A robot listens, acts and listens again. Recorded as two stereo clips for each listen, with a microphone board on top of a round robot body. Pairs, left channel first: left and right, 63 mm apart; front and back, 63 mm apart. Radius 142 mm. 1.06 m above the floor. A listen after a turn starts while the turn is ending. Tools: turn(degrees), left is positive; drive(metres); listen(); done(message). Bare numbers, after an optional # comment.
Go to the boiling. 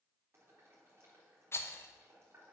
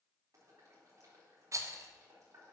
# The boiling: 140° right.
turn(-140)
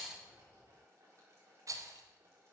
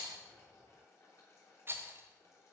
# The boiling is now 45° right.
turn(-45)
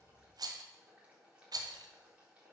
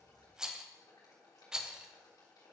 # The boiling is now 20° right.
turn(-20)
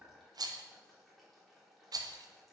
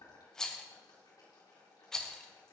drive(1.0)
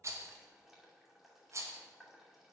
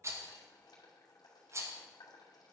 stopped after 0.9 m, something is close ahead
done("Something is in my way. I am facing the boiling but have not reached it.")